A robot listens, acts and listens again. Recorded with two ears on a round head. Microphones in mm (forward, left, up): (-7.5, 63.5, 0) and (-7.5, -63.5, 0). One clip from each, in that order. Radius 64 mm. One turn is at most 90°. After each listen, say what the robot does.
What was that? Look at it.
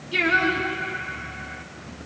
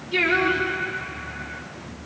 Turn 30° left.
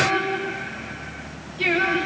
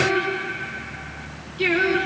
Turn 20° right.
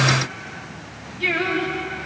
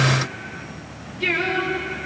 Found it: singing, straight ahead, over 4 m away.